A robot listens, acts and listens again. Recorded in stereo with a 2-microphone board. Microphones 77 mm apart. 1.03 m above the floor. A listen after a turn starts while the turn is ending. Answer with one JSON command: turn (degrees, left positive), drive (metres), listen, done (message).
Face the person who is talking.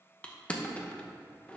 {"listen": true}
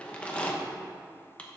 {"listen": true}
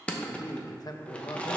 {"turn": 60}
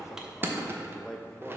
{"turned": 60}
{"done": "Facing the man speaking."}